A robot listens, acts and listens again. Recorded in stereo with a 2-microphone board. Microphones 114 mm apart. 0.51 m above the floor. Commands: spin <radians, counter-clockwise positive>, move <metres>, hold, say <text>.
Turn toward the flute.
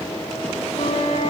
spin 1.22
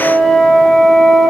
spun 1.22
say Found it: a flute, straight ahead.